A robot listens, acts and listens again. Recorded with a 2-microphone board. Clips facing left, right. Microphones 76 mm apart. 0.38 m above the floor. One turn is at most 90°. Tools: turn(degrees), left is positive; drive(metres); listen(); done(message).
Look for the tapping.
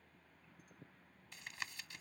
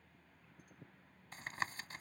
turn(degrees=-40)
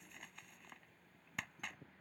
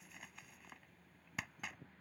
done("Facing the tapping.")